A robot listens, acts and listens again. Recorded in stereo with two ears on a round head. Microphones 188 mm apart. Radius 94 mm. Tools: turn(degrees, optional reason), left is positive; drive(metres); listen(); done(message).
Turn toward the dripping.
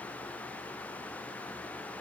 listen()
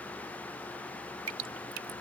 turn(degrees=-65, reason="The dripping: about 65° right or 115° right.")
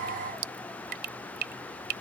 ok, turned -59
turn(degrees=-50, reason="So it is at 50° right.")
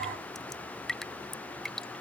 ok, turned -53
done("Found it: dripping, straight ahead.")